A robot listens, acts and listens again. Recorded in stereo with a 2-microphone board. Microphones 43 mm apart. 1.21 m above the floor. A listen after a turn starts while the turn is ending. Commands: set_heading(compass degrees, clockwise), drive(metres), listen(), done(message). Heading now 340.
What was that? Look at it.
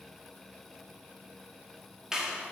set_heading(355)
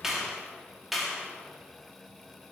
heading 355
done("Facing the clap.")